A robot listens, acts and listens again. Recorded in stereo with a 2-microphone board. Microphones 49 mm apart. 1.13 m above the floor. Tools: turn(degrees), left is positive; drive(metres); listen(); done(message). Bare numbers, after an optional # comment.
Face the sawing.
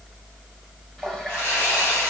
# The sawing: about 50° left or 130° left.
turn(50)
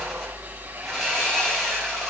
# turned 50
done("Found it: sawing, straight ahead, over 4 m away.")